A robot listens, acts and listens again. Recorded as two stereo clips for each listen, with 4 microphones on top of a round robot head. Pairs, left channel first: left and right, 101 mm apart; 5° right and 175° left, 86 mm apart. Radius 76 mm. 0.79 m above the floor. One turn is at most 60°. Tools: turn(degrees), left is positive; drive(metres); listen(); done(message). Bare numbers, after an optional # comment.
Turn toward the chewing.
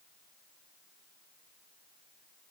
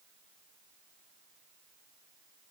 listen()
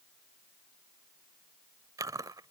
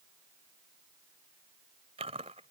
# The chewing: 145° right.
turn(-60)
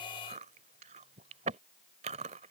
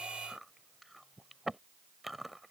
# The chewing is now 100° right.
turn(-60)
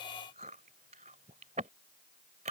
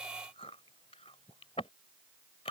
# The chewing is now 55° right.
turn(-55)
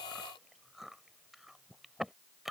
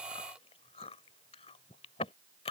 done("Found it: chewing, straight ahead.")